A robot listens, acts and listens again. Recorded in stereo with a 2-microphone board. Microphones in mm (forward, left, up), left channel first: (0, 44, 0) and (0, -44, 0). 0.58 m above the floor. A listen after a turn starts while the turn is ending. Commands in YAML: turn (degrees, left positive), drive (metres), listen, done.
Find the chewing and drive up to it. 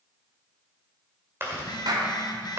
turn: -25
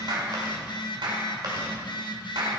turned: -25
listen: true
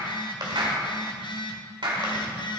turn: -125
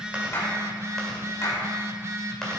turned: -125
listen: true
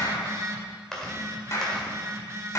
drive: 1.0
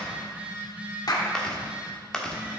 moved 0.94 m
turn: 10
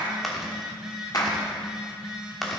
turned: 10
drive: 1.0
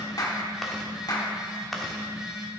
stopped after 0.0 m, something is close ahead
done: "I am next to the chewing."